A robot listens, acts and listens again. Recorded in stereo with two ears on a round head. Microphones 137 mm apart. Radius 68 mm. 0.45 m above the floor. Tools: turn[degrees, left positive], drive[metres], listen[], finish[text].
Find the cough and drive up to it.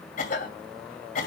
Thought: The cough: about 55° left or 125° left.
Action: turn[55]
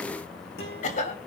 Thought: So it is at 55° left.
Action: turn[55]
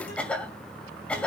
Thought: The cough is now 10° left.
Action: turn[10]
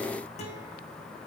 Action: listen[]
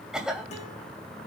Action: drive[1.0]
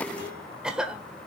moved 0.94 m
Action: drive[1.0]
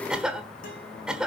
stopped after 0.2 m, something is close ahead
Action: finish[I am next to the cough.]